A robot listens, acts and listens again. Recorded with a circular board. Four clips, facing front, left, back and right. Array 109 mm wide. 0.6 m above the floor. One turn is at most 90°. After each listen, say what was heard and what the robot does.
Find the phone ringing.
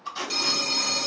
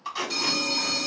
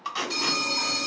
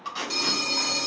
The phone ringing: 25° right. Turn 25° right.
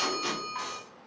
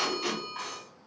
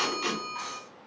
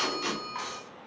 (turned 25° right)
Found it: a phone ringing, straight ahead, 1 to 2 m away.